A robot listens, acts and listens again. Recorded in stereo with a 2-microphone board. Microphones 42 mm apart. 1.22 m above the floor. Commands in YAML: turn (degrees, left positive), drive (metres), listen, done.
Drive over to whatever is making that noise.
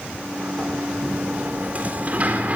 turn: -40
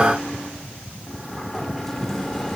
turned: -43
drive: 1.0
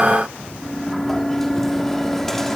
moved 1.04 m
drive: 1.0
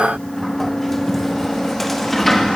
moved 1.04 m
drive: 1.0
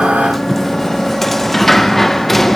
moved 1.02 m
drive: 1.0
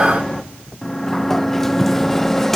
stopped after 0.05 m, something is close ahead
done: "I am next to the sliding door."